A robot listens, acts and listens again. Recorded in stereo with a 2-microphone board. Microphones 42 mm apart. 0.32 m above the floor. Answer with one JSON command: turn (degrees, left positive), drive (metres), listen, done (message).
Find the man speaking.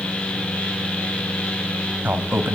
{"turn": -55}
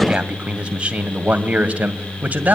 {"turn": -40}
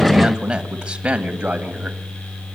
{"turn": -25}
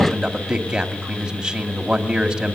{"turn": -15}
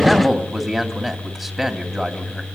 {"done": "Found it: a man speaking, straight ahead."}